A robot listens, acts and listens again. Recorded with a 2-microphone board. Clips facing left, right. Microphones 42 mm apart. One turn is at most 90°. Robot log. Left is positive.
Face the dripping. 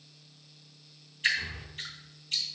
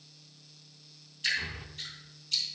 note: The dripping: about 40° left or 140° left.
cmd yaw +40
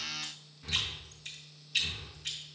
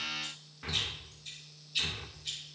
note: So it is at 100° left.
cmd yaw +90
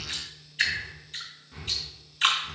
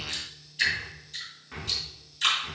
note: The dripping is now 35° left.
cmd yaw +35
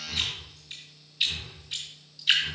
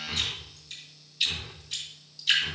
note: The dripping is now 10° left.
cmd yaw +10
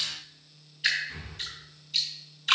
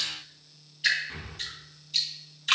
end: Facing the dripping.